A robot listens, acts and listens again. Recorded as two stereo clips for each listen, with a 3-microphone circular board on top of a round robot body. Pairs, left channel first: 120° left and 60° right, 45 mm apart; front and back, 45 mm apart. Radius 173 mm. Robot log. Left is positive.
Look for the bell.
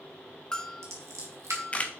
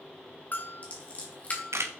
note: The bell: 45° left.
cmd yaw +45
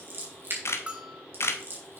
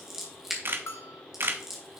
end: Facing the bell.